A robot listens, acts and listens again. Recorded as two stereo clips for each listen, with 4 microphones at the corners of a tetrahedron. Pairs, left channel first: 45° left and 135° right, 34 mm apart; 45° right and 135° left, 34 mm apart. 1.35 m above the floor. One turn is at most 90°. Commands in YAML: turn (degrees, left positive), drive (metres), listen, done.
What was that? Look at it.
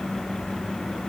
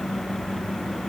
listen: true
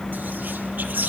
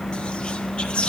turn: -90
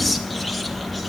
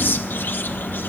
turn: -40
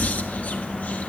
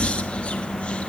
turn: 10
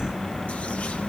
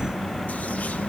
listen: true
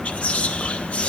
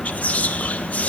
done: "Found it: whispering, straight ahead, 1 to 2 m away."